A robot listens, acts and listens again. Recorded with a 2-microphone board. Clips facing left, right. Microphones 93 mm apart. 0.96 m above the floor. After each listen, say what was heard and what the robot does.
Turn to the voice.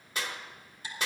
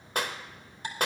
Keep listening.
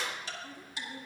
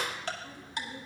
The woman speaking: about 50° left or 130° left. Turn 50° left.
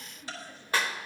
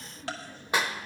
Facing the woman speaking, 2 to 4 m away.